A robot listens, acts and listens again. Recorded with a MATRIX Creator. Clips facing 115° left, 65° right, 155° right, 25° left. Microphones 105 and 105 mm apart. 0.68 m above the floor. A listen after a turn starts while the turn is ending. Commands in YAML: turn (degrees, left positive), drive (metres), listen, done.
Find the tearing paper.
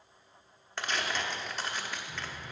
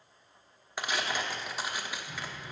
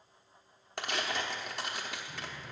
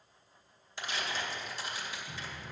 turn: -145
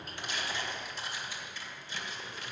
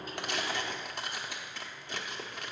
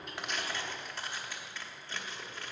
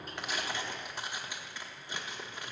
turn: -50
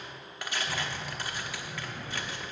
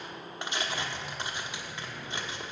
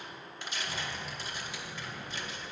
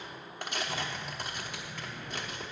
done: "Facing the tearing paper, 1 to 2 m away."